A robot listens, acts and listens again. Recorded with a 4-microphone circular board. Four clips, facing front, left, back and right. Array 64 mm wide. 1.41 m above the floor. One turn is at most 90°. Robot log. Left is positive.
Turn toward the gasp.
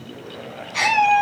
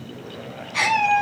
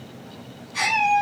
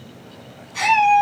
note: The gasp: 60° left.
cmd yaw +60
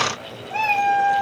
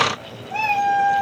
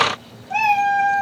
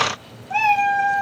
end: I heard a gasp from this way, but can't make it out now.